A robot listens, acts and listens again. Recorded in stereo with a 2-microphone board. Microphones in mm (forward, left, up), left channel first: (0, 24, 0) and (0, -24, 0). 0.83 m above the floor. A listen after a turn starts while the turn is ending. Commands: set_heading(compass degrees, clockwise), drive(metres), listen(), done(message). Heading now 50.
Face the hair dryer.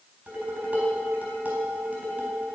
listen()
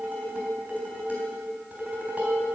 listen()
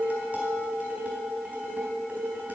done("I can't make out a hair dryer, only dishes clattering.")